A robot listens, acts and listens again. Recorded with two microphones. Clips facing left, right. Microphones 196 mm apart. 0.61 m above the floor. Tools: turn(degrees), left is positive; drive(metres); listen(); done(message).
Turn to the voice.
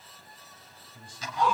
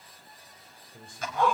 turn(degrees=-55)
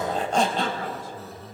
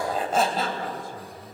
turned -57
turn(degrees=-55)
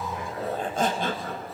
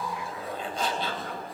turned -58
listen()
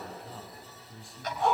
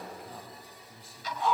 done("Found it: a man speaking, straight ahead, over 4 m away.")